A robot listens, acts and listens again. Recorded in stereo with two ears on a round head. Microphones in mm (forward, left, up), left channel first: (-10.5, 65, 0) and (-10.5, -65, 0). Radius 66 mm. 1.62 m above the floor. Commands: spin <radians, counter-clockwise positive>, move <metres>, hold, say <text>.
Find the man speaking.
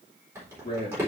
spin 0.52
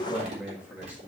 spin -0.17
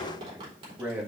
spin -0.17
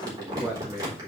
spin -0.17
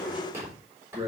spin -0.35
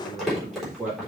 spin -0.17
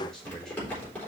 say Found it: a man speaking, straight ahead, 2 to 4 m away.